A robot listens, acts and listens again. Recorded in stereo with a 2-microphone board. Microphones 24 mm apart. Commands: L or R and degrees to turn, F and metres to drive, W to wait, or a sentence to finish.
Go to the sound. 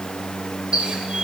R50
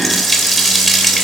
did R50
F1.0
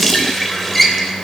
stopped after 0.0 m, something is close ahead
Something is in my way. I am facing the running tap but have not reached it.